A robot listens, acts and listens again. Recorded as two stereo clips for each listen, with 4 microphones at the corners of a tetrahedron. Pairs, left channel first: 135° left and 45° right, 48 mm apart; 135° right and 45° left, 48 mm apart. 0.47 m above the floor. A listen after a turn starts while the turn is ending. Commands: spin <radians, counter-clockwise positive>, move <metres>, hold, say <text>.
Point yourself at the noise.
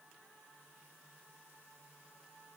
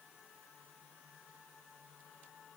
hold
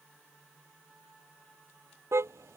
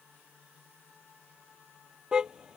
spin -0.52
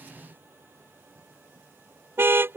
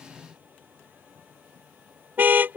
say Facing the car horn.